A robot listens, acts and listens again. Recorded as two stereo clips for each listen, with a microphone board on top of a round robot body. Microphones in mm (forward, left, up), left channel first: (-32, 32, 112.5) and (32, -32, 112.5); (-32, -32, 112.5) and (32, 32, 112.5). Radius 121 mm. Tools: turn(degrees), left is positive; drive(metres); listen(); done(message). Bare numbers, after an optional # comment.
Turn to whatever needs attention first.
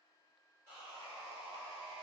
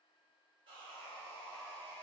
listen()
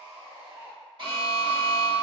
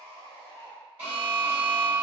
# The alarm: 25° right.
turn(-25)
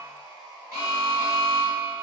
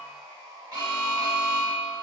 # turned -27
done("Found it: an alarm, straight ahead, 1 to 2 m away.")